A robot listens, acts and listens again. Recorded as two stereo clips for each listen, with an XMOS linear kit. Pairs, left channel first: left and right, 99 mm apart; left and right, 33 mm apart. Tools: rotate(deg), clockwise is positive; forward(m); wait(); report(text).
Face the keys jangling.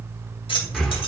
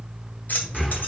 rotate(-70)
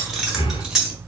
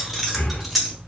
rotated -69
rotate(10)
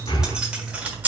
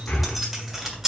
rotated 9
rotate(15)
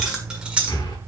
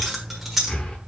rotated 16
rotate(10)
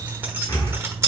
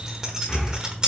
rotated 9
rotate(30)
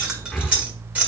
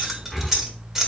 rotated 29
rotate(15)
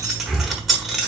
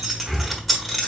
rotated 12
report("Found it: keys jangling, straight ahead.")